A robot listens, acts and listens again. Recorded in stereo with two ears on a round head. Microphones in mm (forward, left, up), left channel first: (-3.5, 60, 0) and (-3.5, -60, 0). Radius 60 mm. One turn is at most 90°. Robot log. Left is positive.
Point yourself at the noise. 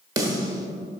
note: The snare drum: about 30° right or 150° right.
cmd yaw -30
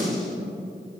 end: Facing the snare drum.